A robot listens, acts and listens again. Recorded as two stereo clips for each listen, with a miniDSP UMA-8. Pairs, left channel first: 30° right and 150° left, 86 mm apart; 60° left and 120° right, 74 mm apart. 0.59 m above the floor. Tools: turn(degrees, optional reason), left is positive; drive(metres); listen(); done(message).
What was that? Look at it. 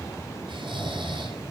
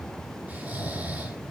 turn(degrees=170, reason="The snoring: 170° left.")
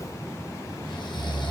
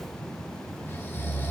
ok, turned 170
done("Found it: snoring, straight ahead.")